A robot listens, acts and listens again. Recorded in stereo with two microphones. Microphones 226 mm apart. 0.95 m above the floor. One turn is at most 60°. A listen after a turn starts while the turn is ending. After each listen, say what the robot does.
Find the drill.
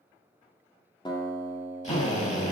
Turn 30° left.
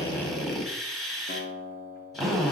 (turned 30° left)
Found it: a drill, straight ahead.